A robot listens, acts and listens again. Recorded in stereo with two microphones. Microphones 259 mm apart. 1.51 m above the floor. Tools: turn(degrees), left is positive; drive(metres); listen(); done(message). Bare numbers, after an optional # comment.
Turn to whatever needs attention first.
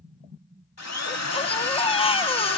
# The baby crying: about 20° left or 160° left.
turn(20)
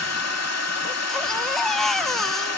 done("Facing the baby crying.")